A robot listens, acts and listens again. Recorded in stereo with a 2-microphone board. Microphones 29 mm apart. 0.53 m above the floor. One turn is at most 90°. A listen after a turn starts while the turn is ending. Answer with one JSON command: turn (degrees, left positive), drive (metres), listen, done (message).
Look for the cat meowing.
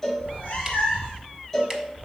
{"turn": 30}
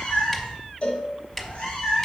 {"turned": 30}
{"turn": 40}
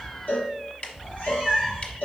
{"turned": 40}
{"turn": 90}
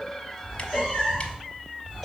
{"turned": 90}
{"turn": 25}
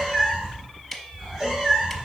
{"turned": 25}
{"turn": -10}
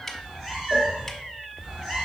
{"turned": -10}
{"done": "Found it: a cat meowing, straight ahead, 2 to 4 m away."}